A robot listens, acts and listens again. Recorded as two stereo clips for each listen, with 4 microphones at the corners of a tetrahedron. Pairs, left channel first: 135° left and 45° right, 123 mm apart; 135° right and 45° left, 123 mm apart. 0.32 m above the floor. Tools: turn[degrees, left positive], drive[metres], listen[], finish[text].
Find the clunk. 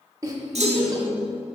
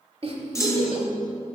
Thought: The clunk: 70° right.
Action: turn[-70]
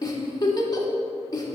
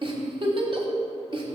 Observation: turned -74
Action: finish[I heard a clunk from this way, but can't make it out now.]